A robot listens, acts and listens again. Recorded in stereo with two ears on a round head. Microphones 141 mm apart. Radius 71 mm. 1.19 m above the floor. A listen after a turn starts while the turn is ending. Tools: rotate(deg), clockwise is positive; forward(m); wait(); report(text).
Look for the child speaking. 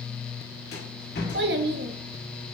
rotate(60)
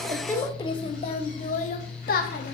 rotate(-60)
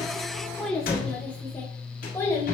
rotate(-15)
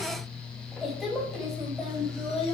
report("Found it: a child speaking, straight ahead, 2 to 4 m away.")